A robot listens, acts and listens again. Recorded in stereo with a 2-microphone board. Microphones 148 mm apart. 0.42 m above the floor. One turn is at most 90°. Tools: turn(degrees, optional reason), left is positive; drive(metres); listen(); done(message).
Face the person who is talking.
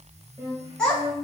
turn(degrees=30)
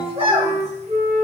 turn(degrees=-40, reason="So it is at 40° right.")
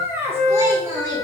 turn(degrees=-25, reason="The child speaking is now 25° right.")
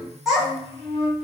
done("Facing the child speaking.")